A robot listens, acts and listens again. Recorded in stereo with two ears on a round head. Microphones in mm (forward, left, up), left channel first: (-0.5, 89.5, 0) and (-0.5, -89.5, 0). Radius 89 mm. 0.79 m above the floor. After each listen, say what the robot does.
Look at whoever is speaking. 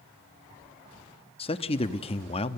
Turn 30° left.
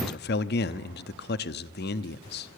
Turn 120° left.
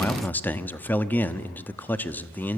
Turn 10° left.
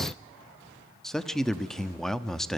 Found it: a man speaking, straight ahead, 1 to 2 m away.